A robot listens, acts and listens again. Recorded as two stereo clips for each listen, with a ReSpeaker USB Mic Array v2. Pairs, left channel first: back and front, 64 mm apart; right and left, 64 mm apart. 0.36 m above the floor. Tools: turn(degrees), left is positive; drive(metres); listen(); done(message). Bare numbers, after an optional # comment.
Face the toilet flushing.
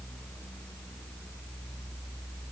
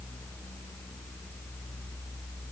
listen()
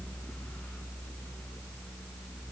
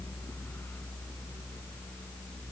listen()
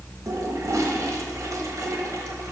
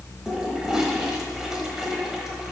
# The toilet flushing: 10° left.
turn(10)
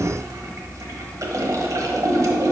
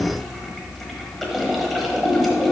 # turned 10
done("Facing the toilet flushing, 1 to 2 m away.")